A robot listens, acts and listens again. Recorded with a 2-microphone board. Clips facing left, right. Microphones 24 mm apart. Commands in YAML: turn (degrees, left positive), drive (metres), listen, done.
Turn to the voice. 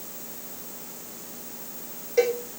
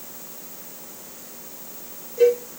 listen: true
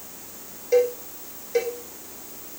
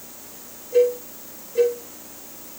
listen: true
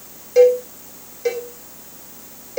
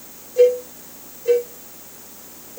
done: "I can't make out anyone speaking to turn to."